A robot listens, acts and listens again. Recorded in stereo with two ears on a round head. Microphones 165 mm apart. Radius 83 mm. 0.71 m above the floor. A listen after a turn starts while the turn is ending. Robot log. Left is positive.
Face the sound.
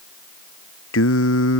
cmd yaw +90
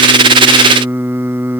note: So it is at 10° right.
cmd yaw -10
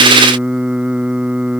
end: Facing the singing.